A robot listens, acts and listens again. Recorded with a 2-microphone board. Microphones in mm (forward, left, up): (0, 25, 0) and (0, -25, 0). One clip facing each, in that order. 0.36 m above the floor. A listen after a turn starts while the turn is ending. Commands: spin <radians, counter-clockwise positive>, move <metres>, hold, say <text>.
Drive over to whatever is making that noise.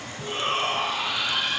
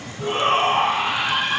spin -0.79
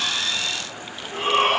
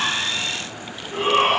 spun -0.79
move 1.0
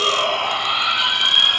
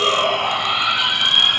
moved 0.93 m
move 1.0
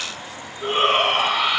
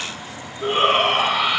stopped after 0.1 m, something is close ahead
say Arrived at the shout, straight ahead.